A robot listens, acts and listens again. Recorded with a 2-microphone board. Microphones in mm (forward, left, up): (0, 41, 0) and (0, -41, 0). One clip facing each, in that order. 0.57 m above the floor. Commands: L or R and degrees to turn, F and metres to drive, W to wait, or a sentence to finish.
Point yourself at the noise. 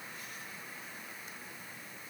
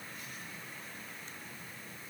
W
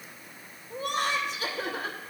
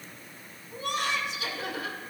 L45
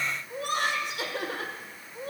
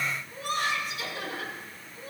L90
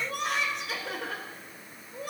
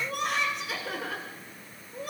Found it: laughter, straight ahead, 2 to 4 m away.